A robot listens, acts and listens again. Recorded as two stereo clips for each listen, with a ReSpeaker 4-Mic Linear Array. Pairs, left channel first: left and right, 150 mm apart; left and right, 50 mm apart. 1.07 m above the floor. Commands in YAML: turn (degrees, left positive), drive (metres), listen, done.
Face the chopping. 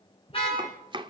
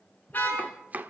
turn: -35
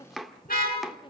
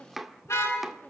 done: "Facing the chopping."